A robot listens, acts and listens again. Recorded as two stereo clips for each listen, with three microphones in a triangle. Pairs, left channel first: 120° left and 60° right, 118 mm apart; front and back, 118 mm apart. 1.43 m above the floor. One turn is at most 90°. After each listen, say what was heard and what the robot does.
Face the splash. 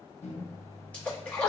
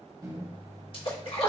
The splash: 45° left. Turn 45° left.
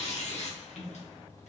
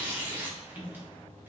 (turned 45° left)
I heard a splash from this way, but can't make it out now.